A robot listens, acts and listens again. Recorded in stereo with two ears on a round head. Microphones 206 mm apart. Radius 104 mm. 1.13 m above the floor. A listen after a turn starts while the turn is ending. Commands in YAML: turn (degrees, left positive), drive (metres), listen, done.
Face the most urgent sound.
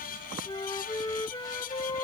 listen: true
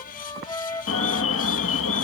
turn: 65
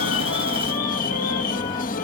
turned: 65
turn: 40
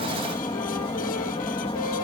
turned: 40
turn: 25
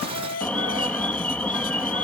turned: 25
done: "Facing the alarm."